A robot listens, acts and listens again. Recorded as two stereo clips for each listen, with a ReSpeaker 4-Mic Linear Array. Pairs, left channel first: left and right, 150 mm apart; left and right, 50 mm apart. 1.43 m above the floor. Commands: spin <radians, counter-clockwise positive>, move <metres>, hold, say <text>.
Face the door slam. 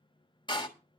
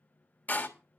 spin 0.52
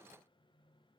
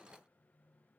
hold
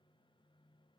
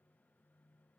say I heard a door slam, but can't make it out now. It was about straight ahead or 120° left.